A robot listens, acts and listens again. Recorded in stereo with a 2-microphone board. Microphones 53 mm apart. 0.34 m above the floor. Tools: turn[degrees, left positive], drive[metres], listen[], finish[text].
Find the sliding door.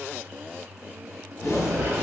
Thought: The sliding door: about 45° right or 135° right.
Action: turn[-45]
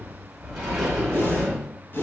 Thought: So it is at 10° right.
Action: turn[-10]
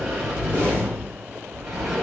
Action: finish[Found it: a sliding door, straight ahead, 1 to 2 m away.]